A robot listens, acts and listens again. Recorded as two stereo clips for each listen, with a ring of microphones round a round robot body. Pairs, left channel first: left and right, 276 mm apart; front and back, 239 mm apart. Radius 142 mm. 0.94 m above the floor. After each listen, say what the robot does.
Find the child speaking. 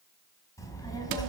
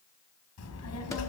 Turn 15° left.
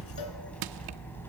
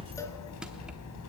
Found it: a child speaking, straight ahead.